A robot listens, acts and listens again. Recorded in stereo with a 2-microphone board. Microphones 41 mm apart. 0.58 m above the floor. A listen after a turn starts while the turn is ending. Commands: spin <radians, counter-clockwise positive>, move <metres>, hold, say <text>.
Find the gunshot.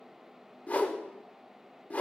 hold
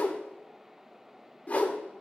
hold
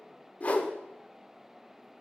say I can't make out a gunshot, only a whoosh.